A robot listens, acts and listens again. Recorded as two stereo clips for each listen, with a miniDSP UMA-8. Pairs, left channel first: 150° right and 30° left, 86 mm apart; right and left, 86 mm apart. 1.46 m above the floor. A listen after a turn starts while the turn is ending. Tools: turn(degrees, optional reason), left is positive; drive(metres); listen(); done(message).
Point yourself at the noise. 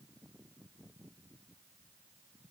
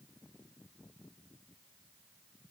listen()
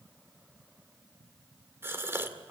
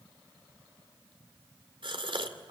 turn(degrees=90, reason="The gasp: 90° left.")
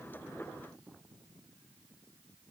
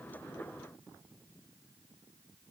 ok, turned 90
done("Facing where the gasp came from. I can't hear it now.")